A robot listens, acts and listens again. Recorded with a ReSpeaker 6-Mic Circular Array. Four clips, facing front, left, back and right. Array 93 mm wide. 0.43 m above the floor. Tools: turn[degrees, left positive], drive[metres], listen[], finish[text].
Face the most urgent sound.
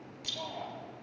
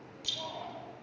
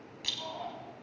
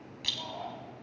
Thought: The shout: 20° left.
Action: turn[20]
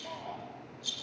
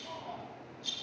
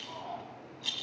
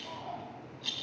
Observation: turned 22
Action: finish[Found it: a shout, straight ahead.]